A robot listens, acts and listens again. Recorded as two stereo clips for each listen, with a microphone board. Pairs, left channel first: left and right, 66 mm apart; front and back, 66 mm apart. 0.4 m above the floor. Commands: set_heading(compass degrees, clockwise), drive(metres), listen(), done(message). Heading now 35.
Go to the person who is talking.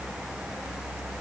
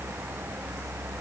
listen()
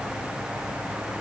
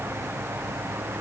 listen()
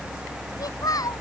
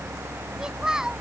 set_heading(295)
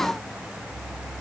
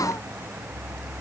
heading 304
set_heading(294)
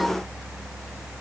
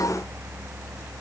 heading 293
listen()
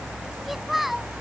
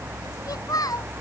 drive(1.0)
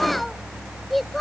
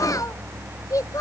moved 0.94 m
drive(1.0)
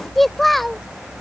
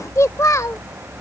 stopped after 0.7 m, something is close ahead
done("I am next to the child speaking.")